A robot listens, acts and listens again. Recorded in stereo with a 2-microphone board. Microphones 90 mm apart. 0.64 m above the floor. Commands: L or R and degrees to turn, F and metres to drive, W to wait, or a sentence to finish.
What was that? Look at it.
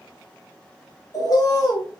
L45
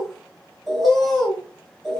Found it: a bird, straight ahead.